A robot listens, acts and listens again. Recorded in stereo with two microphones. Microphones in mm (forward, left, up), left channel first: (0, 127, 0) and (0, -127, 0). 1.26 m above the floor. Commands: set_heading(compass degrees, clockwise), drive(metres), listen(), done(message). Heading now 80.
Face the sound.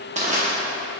set_heading(110)
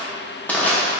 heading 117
done("Facing the crushing, under 1 m away.")